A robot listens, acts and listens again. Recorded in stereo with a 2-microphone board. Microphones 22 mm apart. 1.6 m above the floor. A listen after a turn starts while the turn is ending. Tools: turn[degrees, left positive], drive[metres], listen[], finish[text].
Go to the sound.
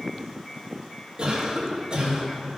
Thought: The cough: about 30° right or 150° right.
Action: turn[-30]
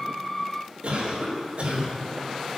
Thought: So it is at 120° right.
Action: turn[-120]
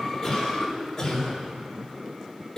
Thought: The cough is now 25° left.
Action: turn[25]
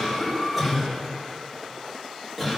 Thought: The cough is now 10° right.
Action: turn[-10]
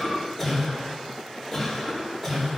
Action: drive[1.0]
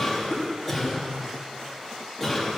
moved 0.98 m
Action: drive[1.0]
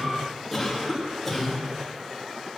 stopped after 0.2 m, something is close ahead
Action: finish[Blocked. The cough is further on, straight ahead.]